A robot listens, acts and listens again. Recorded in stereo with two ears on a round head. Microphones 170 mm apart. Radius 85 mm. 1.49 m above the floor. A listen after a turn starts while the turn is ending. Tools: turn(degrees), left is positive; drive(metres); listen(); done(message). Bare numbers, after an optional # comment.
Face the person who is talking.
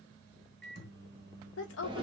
# The woman speaking: about 70° left or 110° left.
turn(70)
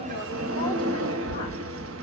listen()
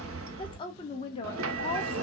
# So it is at 30° left.
turn(30)
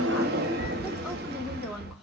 done("Found it: a woman speaking, straight ahead, 1 to 2 m away.")